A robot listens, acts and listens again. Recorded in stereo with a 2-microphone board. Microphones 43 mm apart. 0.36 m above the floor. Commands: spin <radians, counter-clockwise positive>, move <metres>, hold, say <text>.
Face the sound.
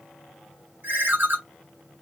spin -0.96
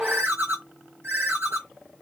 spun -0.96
spin -1.13
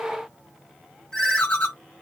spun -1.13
spin 0.44
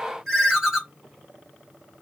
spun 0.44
spin -0.17
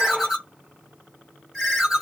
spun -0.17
say Facing the ringtone.